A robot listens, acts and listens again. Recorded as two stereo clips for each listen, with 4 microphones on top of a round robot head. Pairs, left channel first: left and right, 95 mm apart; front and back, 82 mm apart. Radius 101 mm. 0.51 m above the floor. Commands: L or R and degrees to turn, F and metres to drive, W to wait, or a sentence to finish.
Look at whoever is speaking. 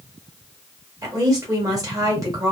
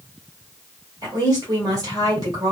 R140
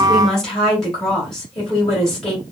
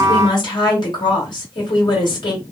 Facing the woman speaking.